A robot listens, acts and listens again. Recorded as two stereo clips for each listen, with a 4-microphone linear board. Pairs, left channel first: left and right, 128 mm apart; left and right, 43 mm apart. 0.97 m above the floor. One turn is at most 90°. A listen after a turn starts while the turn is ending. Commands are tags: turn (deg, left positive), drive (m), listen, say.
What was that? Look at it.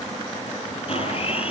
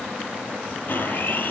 <turn deg="50"/>
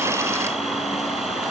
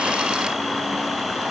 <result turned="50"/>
<say>Facing the blender, over 4 m away.</say>